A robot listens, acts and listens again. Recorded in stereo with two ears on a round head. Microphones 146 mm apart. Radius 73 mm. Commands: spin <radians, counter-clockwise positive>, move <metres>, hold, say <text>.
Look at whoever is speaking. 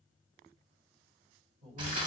spin -0.70
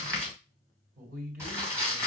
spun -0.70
spin -1.57
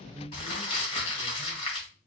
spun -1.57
spin -0.70
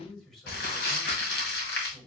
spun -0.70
say Facing the man speaking.